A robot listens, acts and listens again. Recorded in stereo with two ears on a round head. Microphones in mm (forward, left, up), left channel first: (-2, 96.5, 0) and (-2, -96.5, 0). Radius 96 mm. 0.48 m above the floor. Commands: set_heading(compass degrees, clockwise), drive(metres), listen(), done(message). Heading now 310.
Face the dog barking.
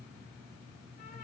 listen()
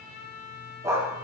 set_heading(340)
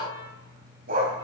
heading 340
set_heading(120)
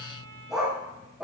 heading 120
done("Facing the dog barking.")